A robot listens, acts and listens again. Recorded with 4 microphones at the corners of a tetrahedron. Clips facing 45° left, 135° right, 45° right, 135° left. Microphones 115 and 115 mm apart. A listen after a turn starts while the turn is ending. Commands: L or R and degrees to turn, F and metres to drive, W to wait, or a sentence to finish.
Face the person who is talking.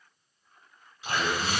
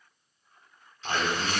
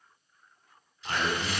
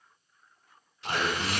R170
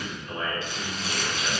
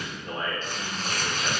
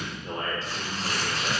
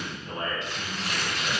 R45
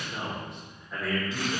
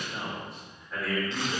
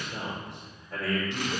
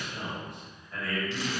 R40
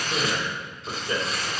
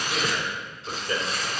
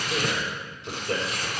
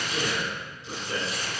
R25
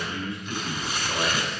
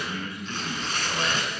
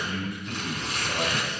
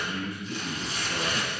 R20
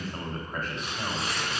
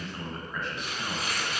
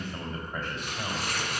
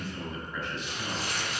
Found it: a man speaking, straight ahead.